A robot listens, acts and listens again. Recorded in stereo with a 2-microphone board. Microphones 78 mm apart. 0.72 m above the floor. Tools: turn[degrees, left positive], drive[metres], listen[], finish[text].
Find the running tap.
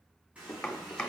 Thought: The running tap: about 20° right or 160° right.
Action: turn[-20]
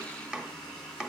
Action: finish[Found it: a running tap, straight ahead.]